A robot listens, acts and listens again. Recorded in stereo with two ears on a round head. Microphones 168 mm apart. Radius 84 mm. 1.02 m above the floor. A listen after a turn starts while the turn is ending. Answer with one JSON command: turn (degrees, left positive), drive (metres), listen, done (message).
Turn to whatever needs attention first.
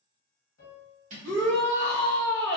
{"turn": 25}
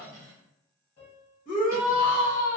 {"turn": 125}
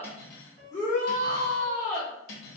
{"turn": 20}
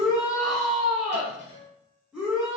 {"done": "Found it: a shout, straight ahead."}